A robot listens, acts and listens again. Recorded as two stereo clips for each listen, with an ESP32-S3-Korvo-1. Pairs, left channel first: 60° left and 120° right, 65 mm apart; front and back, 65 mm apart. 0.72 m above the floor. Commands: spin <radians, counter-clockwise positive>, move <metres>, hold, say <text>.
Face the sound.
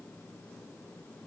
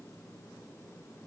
hold
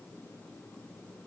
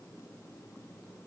hold
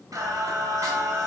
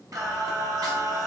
spin -2.88
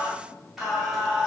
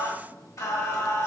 spin -0.70
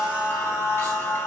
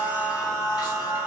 say Found it: singing, straight ahead, 2 to 4 m away.